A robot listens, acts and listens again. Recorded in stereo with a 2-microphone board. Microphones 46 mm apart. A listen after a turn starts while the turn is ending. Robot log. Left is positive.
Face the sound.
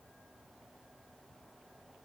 cmd idle
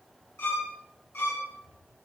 note: The violin: about 55° left or 125° left.
cmd yaw +55
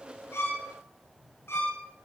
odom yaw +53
note: So it is at 70° left.
cmd yaw +70
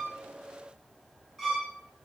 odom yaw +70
end: Facing the violin, 2 to 4 m away.